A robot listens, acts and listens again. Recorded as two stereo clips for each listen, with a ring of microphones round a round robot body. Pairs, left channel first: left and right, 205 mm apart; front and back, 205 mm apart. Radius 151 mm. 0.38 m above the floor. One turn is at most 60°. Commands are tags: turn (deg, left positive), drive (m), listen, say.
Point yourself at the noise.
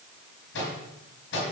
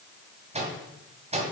<turn deg="60"/>
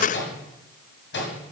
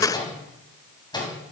<turn deg="60"/>
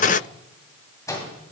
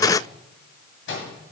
<turn deg="15"/>
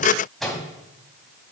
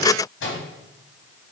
<say>Facing the microwave.</say>